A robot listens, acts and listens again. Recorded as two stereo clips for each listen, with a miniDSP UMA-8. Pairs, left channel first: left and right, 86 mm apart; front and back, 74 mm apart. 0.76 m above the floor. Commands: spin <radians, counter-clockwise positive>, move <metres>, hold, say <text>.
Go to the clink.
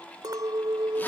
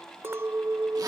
spin -2.27
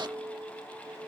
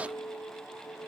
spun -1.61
spin -0.61
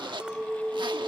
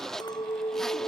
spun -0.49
spin -0.17
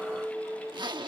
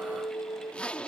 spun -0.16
move 1.0
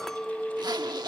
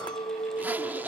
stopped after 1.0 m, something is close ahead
say I am next to the clink.